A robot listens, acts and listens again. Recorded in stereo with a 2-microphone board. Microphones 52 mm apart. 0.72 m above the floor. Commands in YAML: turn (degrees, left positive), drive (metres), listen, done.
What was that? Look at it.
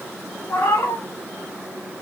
turn: 90
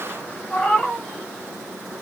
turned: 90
turn: 10
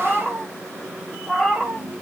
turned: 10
done: "Found it: a cat meowing, straight ahead, 1 to 2 m away."